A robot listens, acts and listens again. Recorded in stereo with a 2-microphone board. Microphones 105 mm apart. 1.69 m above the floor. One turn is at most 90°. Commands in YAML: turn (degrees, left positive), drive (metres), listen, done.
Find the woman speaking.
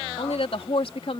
turn: 65
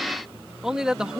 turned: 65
turn: -10
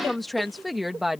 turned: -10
done: "Facing the woman speaking."